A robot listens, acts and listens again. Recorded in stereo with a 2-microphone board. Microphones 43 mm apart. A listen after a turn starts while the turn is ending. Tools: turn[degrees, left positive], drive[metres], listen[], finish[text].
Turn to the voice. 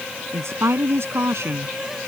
Thought: The woman speaking: about 70° right or 110° right.
Action: turn[-70]
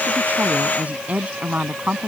Thought: So it is at 35° right.
Action: turn[-35]
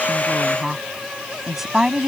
Thought: The woman speaking is now 10° right.
Action: turn[-10]
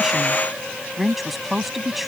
Action: finish[Found it: a woman speaking, straight ahead.]